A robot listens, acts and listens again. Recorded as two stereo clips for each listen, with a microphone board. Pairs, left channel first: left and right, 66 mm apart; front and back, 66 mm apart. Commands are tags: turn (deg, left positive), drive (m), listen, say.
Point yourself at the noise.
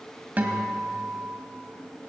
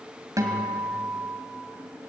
<turn deg="-150"/>
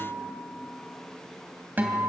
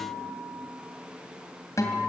<turn deg="-30"/>
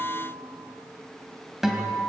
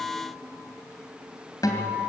<say>Facing the guitar, 2 to 4 m away.</say>